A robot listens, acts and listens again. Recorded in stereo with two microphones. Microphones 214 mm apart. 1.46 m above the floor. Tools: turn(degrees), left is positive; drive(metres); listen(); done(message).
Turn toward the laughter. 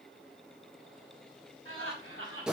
turn(degrees=-75)
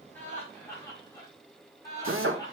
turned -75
turn(degrees=20)
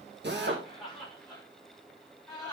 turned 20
done("Facing the laughter, over 4 m away.")